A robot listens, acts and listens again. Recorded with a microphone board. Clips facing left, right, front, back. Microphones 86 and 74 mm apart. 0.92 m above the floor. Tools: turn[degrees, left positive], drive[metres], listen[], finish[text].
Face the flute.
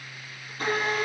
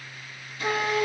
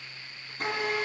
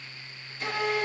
Thought: The flute: 70° right.
Action: turn[-70]
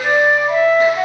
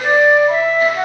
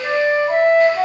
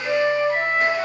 Action: finish[Facing the flute, over 4 m away.]